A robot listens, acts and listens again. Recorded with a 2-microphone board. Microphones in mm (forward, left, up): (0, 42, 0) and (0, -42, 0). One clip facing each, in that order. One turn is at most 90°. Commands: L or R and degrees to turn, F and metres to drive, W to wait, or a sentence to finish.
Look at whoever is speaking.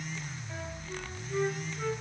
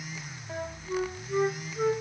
W
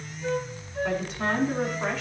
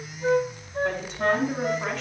L30
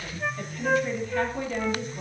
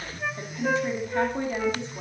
R30
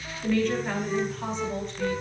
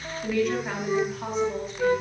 Facing the woman speaking.